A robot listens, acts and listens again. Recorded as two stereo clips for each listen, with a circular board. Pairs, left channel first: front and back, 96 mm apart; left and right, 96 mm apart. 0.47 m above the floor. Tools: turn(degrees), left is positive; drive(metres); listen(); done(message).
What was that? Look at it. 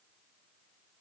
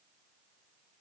listen()
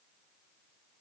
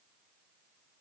listen()
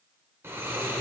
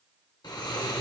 turn(degrees=120)
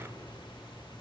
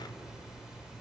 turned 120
turn(degrees=-10)
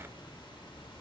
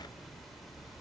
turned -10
done("Found it: snoring, straight ahead, under 1 m away.")